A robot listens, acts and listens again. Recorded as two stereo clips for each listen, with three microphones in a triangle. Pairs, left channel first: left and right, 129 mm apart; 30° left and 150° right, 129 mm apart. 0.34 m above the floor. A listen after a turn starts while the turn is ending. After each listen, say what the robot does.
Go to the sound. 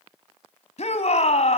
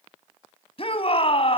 Turn 70° left.
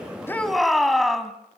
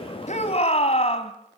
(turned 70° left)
Drive 1.0 m forward.
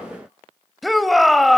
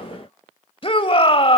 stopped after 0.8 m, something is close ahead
Arrived at the shout, straight ahead.